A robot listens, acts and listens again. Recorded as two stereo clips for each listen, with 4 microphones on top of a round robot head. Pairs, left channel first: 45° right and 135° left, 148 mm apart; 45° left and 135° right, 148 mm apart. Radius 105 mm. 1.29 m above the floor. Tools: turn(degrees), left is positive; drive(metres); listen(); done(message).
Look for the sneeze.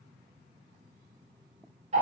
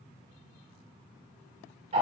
listen()
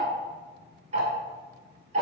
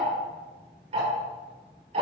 listen()
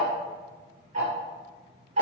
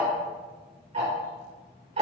done("I can't make out a sneeze to turn to.")